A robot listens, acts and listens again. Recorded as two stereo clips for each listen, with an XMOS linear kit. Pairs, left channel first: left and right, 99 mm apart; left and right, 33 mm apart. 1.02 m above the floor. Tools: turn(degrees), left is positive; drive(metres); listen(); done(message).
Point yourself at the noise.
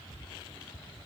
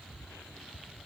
listen()
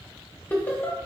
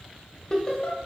turn(degrees=20)
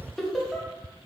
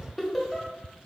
done("Facing the laughter, under 1 m away.")